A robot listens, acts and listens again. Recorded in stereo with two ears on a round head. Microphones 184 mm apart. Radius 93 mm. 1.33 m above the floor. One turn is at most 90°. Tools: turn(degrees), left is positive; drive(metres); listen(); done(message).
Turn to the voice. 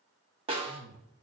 turn(degrees=-70)
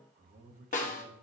turn(degrees=-45)
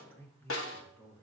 turn(degrees=10)
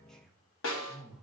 done("Facing the man speaking, 1 to 2 m away.")